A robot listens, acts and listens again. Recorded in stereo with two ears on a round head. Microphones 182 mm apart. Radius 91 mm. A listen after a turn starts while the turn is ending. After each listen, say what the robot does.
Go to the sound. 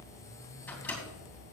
Turn 30° left.
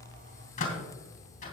Turn 140° left.
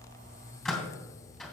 Drive 1.0 m forward.
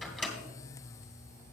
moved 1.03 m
Drive 1.0 m forward.
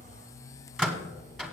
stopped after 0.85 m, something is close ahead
I am next to the microwave.